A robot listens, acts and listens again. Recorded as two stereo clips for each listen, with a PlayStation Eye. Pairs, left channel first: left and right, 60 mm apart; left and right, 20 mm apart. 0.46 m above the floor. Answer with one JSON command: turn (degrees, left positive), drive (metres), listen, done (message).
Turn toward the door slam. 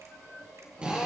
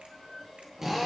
{"listen": true}
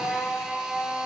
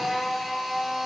{"listen": true}
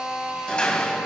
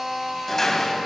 {"turn": 20}
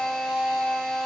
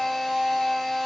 {"listen": true}
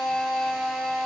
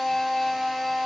{"done": "I heard a door slam, but can't make it out now. It was about straight ahead or 140° left."}